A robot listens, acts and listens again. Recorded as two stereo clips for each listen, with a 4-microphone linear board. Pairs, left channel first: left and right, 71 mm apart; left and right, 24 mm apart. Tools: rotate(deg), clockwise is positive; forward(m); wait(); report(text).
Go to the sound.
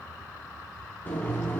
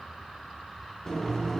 rotate(-25)
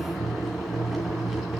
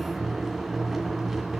forward(1.0)
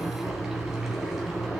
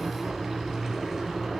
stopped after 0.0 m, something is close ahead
report("Blocked. The boiling is further on, straight ahead.")